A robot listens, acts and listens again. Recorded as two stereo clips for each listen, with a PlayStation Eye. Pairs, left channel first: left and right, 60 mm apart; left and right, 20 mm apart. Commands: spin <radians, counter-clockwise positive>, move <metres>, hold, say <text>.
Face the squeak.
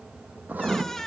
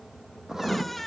spin 0.52
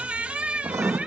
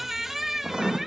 spin -0.35
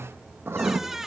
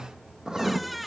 say Facing the squeak, under 1 m away.